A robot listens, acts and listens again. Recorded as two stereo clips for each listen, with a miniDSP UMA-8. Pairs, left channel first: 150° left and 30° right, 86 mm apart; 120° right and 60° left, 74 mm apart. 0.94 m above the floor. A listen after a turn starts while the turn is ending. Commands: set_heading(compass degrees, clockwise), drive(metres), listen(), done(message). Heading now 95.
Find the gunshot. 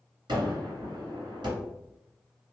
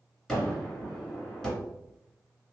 set_heading(130)
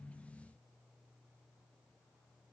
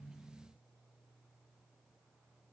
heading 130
done("I heard a gunshot from this way, but can't make it out now.")